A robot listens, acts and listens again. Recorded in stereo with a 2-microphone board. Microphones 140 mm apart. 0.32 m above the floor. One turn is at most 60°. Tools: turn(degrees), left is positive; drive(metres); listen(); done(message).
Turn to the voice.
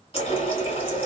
listen()
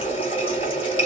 listen()
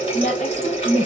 turn(degrees=60)
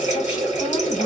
turn(degrees=40)
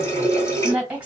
turn(degrees=-10)
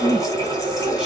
done("Found it: a woman speaking, straight ahead.")